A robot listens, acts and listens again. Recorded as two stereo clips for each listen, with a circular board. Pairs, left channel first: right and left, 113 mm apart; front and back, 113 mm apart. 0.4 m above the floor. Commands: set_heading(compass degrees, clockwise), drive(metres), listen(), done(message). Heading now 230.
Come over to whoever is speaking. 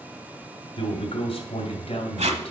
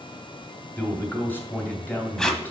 set_heading(300)
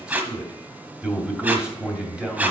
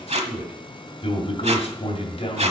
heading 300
set_heading(290)
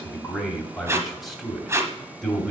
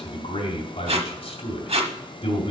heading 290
drive(1.0)
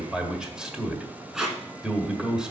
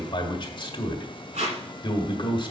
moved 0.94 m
set_heading(280)
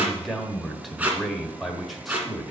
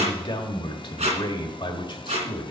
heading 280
drive(1.0)
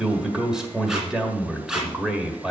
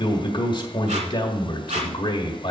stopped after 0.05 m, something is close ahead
set_heading(270)
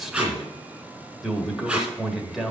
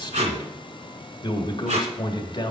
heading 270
done("I am next to the man speaking.")